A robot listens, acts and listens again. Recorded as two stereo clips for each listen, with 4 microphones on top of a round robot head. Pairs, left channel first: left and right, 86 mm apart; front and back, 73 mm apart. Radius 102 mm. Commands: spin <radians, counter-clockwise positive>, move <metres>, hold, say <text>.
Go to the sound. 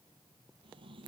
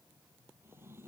spin -2.01
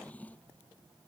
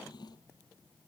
spin 0.35
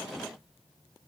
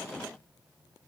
move 1.0
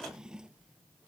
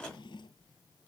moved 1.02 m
spin -0.17
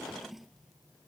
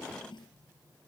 move 1.0
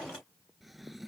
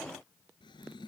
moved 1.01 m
move 1.0
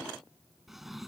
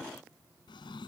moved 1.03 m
move 1.0
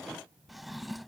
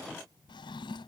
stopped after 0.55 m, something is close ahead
say Arrived at the drawer, straight ahead.